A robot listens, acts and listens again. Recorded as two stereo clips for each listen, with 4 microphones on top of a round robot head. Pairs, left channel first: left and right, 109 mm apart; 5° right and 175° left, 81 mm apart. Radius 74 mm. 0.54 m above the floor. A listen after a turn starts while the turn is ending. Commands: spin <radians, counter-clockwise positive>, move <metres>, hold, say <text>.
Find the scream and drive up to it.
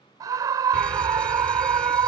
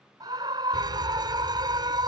spin -2.53
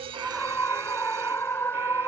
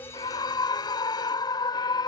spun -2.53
spin 0.35
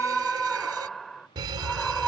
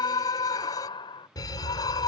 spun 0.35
move 1.0
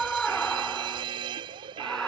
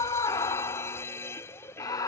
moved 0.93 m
move 1.0
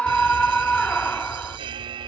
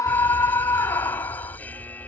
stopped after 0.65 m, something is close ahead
spin 0.26
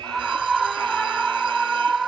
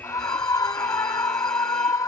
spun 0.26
say I am next to the scream.